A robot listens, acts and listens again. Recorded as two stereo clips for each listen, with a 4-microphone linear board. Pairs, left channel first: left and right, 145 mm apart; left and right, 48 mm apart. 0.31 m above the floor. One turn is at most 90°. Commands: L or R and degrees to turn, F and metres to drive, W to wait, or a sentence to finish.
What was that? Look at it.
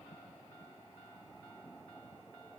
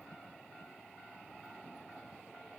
W
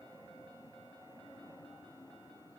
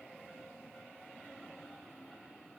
W
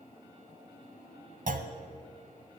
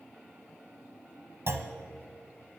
R65
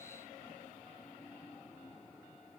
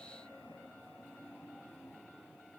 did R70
W
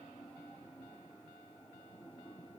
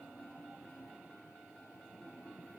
I heard a clunk, but can't make it out now. It was about 5° left or 45° right.